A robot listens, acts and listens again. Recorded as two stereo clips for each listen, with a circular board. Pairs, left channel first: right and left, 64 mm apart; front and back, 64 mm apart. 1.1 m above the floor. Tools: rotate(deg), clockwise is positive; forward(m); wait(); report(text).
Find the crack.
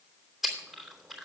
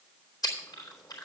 wait()
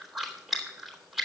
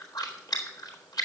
wait()
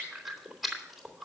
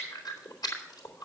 report("I can't make out a crack to turn to.")